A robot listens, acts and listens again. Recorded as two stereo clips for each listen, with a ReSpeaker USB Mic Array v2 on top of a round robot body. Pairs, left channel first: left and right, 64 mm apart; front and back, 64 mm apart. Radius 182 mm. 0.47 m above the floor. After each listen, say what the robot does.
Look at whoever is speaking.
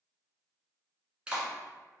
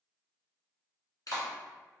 Keep listening.
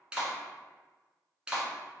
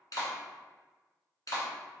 Keep listening.
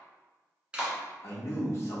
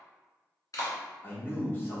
Turn 55° left.
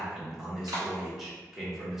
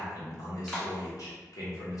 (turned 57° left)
Found it: a man speaking, straight ahead.